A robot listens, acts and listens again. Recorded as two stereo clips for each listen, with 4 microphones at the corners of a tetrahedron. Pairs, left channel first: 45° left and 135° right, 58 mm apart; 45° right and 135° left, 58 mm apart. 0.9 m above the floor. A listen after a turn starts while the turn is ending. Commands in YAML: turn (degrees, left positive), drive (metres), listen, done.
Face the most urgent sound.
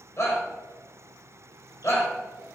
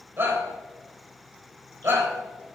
turn: 80
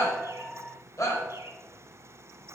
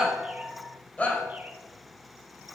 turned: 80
turn: 15
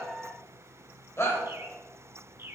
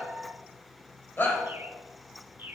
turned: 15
done: "Found it: a shout, straight ahead, 2 to 4 m away."